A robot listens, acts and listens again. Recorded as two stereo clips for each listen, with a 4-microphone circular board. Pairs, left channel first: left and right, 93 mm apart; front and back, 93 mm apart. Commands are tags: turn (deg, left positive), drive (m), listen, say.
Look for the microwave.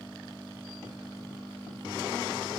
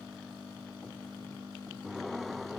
<listen/>
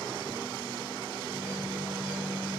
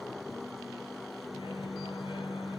<turn deg="-10"/>
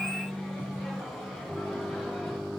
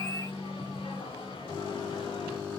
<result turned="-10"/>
<say>Facing the microwave.</say>